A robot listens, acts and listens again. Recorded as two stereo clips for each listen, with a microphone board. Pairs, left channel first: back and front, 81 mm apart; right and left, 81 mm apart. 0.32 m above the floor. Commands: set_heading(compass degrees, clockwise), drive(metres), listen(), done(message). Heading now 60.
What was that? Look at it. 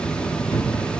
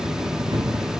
set_heading(295)
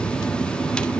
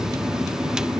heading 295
done("I heard a thud from this way, but can't make it out now.")